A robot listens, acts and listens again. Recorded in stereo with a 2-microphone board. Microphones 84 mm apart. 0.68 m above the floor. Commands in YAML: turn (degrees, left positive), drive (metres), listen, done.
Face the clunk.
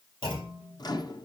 turn: 90
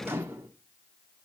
done: "Facing where the clunk came from. I can't hear it now."